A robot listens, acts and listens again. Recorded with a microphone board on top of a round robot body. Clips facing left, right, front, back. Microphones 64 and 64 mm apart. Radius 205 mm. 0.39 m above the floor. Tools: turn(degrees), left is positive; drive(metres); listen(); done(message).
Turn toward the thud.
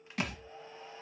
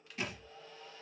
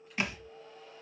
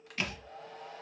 turn(degrees=70)
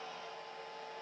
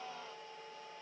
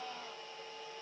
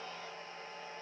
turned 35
turn(degrees=35)
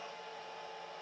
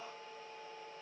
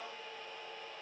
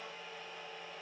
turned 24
turn(degrees=10)
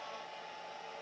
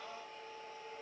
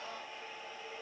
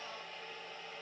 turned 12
done("Facing where the thud came from. I can't hear it now.")